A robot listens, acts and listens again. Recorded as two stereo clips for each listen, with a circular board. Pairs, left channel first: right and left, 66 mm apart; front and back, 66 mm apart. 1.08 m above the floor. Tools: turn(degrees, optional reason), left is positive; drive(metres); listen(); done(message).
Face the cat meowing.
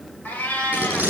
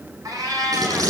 turn(degrees=-160, reason="The cat meowing: 160° right.")
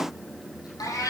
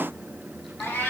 turn(degrees=-60, reason="The cat meowing is now 60° right.")
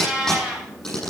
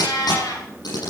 turn(degrees=15, reason="The cat meowing is now 15° left.")
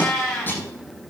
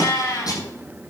turn(degrees=-10, reason="The cat meowing is now 10° right.")
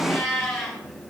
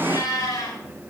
done("Facing the cat meowing.")